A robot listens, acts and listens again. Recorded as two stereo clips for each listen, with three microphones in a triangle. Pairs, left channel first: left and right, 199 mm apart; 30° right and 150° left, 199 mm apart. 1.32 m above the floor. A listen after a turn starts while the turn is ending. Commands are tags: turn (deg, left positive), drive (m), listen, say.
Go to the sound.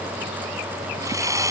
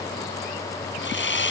<turn deg="-15"/>
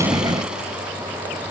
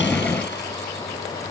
<listen/>
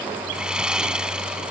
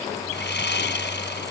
<drive m="1.0"/>
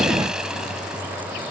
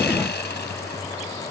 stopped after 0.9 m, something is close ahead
<listen/>
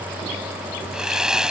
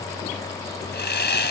<say>Blocked. The sawing is further on, straight ahead.</say>